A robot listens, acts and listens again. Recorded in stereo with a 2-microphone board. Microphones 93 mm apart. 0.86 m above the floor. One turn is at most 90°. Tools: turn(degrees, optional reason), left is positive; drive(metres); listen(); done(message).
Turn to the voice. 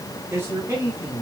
turn(degrees=-30, reason="The man speaking: about 30° right or 150° right.")
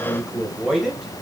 done("Found it: a man speaking, straight ahead, over 4 m away.")